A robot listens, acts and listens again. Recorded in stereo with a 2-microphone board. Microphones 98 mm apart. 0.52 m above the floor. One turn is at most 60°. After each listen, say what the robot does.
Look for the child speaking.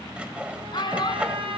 Turn 50° left.
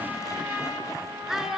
Facing the child speaking, 2 to 4 m away.